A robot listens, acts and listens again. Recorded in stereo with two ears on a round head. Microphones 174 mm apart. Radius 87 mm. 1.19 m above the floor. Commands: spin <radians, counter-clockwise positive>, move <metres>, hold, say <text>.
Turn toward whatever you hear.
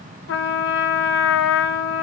spin 1.13
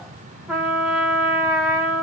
say Facing the trumpet.